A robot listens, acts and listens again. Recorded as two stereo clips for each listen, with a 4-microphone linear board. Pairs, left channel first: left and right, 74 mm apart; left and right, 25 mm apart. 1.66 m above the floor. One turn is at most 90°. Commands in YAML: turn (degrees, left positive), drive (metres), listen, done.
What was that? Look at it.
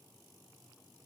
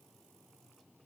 listen: true
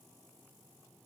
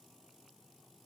listen: true
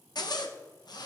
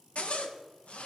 turn: 65
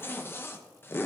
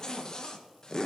turn: 35
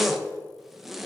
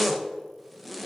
done: "Facing the zipper, under 1 m away."